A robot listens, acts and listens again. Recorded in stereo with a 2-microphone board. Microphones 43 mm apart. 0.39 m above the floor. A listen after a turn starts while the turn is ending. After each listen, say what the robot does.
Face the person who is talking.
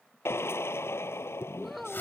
Turn 30° left.
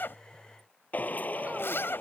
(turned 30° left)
Keep listening.
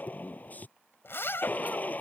Keep listening.
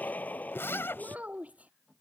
Turn 35° right.
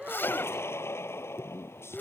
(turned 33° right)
Keep listening.
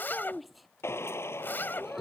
Facing the child speaking.